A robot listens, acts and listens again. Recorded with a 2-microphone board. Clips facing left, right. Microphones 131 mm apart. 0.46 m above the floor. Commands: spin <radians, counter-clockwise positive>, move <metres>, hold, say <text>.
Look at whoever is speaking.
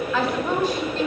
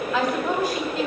spin -0.52
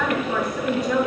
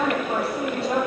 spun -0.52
spin -2.62
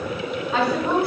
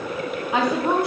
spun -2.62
spin -0.35
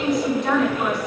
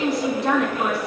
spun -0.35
say Facing the woman speaking, 2 to 4 m away.